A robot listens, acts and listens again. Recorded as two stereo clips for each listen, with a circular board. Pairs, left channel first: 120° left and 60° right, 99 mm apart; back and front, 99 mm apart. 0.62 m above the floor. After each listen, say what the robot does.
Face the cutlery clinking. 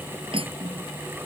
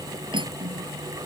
Turn 35° right.
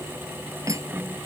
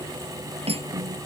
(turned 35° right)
Found it: cutlery clinking, straight ahead.